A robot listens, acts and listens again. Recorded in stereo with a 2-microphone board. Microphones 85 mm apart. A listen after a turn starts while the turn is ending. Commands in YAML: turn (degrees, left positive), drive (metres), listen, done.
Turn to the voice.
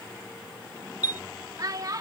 turn: -45
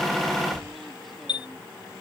listen: true
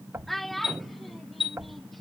done: "Facing the child speaking."